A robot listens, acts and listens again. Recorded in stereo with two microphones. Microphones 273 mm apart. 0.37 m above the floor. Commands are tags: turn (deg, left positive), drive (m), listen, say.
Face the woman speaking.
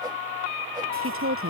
<turn deg="-50"/>
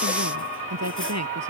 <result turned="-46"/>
<turn deg="-75"/>
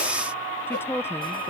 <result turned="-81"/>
<turn deg="10"/>
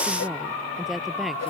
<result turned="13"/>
<say>Facing the woman speaking.</say>